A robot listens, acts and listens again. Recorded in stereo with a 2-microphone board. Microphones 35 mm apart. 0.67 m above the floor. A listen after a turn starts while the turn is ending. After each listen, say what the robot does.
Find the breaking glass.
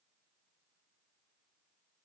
Keep listening.
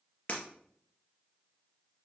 Turn 30° left.
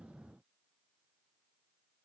Keep listening.
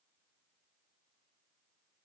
I heard breaking glass, but can't make it out now. It was about straight ahead or 120° left.